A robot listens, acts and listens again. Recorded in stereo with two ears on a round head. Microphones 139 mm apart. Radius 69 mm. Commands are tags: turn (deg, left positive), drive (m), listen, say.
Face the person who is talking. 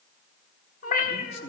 <turn deg="40"/>
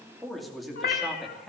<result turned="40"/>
<say>Found it: a man speaking, straight ahead.</say>